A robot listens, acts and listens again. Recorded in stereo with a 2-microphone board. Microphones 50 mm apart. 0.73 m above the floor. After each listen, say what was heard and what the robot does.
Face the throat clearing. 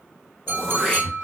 The throat clearing: about 20° right or 160° right. Turn 20° right.
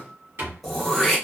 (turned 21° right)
Facing the throat clearing.